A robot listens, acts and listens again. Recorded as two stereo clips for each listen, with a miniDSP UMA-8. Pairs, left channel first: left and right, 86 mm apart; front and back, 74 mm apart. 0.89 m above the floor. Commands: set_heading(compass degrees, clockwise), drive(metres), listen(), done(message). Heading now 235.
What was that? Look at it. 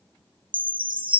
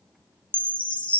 set_heading(305)
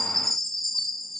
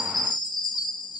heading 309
done("Facing the chime, under 1 m away.")